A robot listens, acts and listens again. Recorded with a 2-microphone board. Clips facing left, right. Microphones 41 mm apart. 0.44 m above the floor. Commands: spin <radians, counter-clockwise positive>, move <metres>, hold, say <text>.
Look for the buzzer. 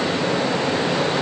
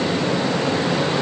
hold
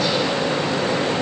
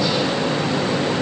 hold
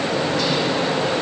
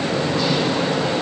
say I can't make out a buzzer to turn to.